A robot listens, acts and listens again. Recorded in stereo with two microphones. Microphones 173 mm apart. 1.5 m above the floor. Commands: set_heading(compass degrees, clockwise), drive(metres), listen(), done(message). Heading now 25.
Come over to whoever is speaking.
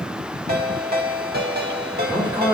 set_heading(45)
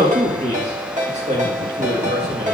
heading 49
set_heading(189)
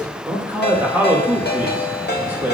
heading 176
set_heading(186)
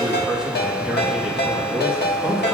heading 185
drive(1.0)
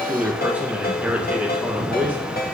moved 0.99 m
set_heading(195)
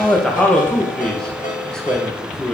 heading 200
drive(1.0)
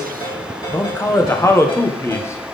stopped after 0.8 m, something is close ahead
set_heading(185)
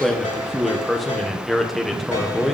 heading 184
done("I am next to the man speaking.")